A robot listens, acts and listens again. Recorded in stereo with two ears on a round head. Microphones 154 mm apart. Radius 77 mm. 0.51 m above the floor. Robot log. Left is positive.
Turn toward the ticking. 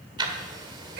note: The ticking: about 25° right or 155° right.
cmd yaw -25
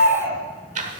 note: So it is at 125° right.
cmd yaw -125
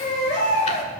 cmd idle
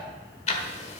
note: The ticking is now 45° left.
cmd yaw +45
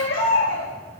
cmd idle
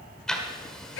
end: Found it: ticking, straight ahead, 1 to 2 m away.